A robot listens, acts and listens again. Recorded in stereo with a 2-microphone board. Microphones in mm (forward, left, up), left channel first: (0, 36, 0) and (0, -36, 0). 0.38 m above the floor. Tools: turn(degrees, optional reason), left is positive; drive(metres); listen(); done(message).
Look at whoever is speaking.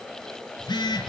listen()
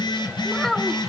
turn(degrees=30)
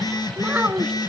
turn(degrees=-25, reason="So it is at 25° right.")
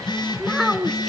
done("Facing the child speaking, 2 to 4 m away.")